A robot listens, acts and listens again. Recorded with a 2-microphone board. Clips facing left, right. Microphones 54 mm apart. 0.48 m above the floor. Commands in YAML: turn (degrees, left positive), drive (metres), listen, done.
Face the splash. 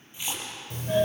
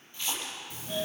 turn: 20
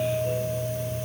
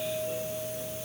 listen: true
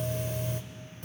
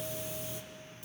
done: "I heard a splash, but can't make it out now. It was about straight ahead or 140° left."